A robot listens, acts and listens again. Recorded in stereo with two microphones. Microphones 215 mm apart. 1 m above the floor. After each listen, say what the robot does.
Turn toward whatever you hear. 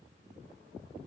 Keep listening.
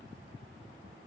Keep listening.
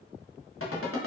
Turn 90° left.
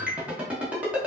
Found it: a ringtone, straight ahead.